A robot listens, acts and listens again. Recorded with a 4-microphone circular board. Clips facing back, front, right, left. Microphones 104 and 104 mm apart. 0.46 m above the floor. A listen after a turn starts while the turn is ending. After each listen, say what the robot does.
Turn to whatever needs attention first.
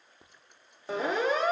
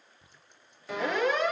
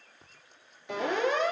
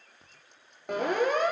Turn 125° left.
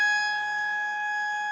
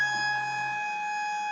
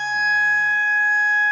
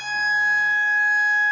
Turn 10° left.
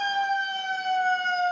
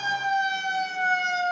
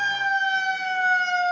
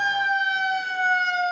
Found it: a siren, straight ahead.